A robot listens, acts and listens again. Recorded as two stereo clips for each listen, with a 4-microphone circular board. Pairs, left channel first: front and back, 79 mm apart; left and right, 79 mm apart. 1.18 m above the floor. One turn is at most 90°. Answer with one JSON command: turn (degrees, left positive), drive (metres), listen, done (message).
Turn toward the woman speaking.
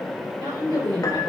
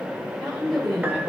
{"turn": 90}
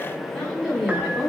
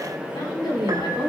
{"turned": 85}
{"turn": 80}
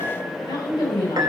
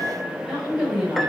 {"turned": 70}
{"done": "Found it: a woman speaking, straight ahead, over 4 m away."}